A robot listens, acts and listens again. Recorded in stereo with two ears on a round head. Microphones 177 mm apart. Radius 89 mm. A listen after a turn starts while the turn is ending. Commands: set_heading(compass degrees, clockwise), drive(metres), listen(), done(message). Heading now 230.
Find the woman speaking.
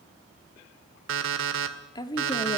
set_heading(210)
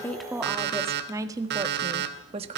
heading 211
set_heading(246)
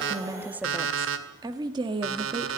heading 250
set_heading(275)
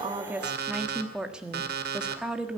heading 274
done("Facing the woman speaking.")